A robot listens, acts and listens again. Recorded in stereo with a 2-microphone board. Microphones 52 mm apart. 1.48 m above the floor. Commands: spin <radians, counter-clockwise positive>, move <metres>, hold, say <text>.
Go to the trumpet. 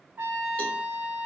spin -0.79
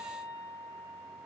spin -1.31
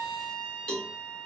move 1.0
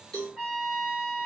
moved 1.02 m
spin -0.17
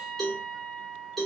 move 1.0
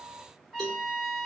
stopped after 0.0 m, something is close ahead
say Arrived at the trumpet, straight ahead.